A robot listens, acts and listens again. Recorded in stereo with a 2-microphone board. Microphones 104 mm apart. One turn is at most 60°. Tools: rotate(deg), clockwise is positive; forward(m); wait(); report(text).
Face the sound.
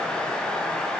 wait()
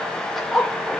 rotate(-30)
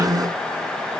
wait()
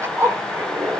rotate(30)
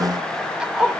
rotate(10)
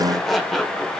report("Facing the zipper.")